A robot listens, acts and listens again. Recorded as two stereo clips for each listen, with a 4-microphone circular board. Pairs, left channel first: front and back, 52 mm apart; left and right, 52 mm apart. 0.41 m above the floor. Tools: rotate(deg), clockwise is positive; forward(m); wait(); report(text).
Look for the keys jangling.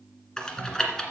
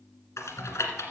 wait()
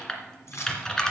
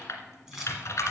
rotate(10)
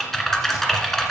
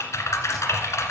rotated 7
wait()
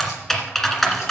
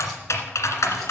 wait()
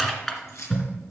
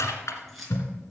report("Found it: keys jangling, straight ahead, over 4 m away.")